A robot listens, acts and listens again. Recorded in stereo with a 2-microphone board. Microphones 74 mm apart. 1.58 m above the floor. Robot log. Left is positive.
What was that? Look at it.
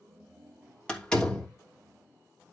cmd yaw +30
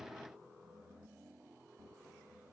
cmd idle
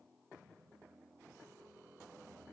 end: I heard a door slam, but can't make it out now. It was about 15° right or 135° left.